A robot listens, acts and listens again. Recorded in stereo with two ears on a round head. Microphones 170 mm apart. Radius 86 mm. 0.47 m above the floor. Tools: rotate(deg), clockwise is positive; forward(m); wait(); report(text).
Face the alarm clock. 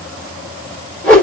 wait()
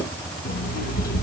rotate(-45)
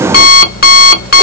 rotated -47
rotate(-70)
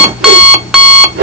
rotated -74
report("Found it: an alarm clock, straight ahead.")